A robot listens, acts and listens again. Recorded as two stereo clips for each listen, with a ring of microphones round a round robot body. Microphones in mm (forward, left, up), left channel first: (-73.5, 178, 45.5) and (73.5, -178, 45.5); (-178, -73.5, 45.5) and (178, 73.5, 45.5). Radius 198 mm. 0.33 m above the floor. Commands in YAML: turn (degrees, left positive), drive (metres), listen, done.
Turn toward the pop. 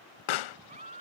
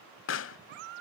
turn: 145
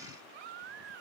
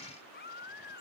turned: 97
turn: 45
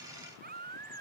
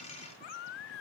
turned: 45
done: "Facing where the pop came from. I can't hear it now."